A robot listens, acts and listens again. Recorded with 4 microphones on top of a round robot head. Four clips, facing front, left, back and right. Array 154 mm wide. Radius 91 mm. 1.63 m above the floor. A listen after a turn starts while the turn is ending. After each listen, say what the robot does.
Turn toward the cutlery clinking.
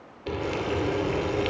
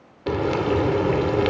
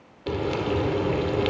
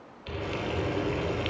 Keep listening.
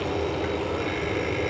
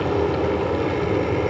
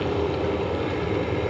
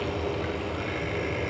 Keep listening.
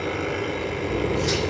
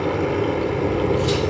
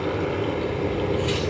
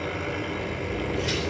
Turn 45° left.
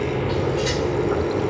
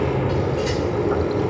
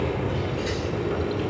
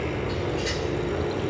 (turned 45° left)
Facing the cutlery clinking, 2 to 4 m away.